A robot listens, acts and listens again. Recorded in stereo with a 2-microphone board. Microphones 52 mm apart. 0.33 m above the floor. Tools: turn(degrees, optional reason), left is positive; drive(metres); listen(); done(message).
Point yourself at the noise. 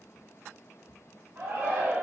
turn(degrees=-40, reason="The shout: about 40° right or 140° right.")
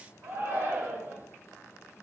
turn(degrees=-95, reason="So it is at 95° right.")
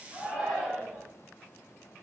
done("Facing the shout.")